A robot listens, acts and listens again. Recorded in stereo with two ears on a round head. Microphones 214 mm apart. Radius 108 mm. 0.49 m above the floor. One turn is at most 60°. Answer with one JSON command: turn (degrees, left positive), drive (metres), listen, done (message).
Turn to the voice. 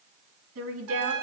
{"turn": -60}
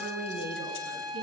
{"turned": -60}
{"turn": -50}
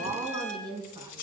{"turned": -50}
{"turn": -20}
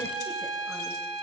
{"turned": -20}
{"listen": true}
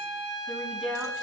{"done": "Facing the woman speaking, 2 to 4 m away."}